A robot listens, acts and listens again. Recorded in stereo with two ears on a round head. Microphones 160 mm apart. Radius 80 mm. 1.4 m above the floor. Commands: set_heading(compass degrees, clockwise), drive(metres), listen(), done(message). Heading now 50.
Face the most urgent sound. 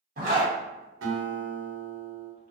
listen()
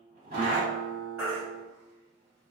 set_heading(80)
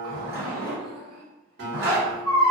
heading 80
set_heading(65)
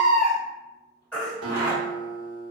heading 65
done("Found it: a baby crying, straight ahead.")